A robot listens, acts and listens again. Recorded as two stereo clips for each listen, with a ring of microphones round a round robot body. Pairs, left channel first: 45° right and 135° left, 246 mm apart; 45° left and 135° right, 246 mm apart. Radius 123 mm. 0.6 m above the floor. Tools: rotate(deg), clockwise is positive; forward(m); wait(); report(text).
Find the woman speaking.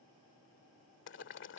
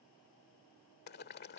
wait()
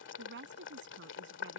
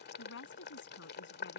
rotate(-90)
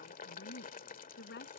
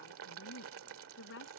report("Found it: a woman speaking, straight ahead.")